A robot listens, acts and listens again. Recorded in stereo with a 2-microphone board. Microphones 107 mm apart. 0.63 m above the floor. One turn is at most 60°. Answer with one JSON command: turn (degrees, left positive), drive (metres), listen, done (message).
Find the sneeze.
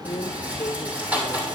{"listen": true}
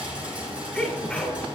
{"turn": 30}
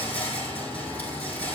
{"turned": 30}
{"listen": true}
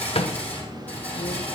{"done": "I heard a sneeze, but can't make it out now. It was about 20° right or 140° left."}